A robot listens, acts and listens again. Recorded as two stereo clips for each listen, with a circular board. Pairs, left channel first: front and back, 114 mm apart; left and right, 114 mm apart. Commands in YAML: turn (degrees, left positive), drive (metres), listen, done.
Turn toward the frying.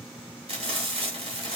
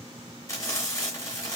turn: 155
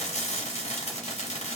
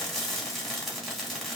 done: "Facing the frying, 1 to 2 m away."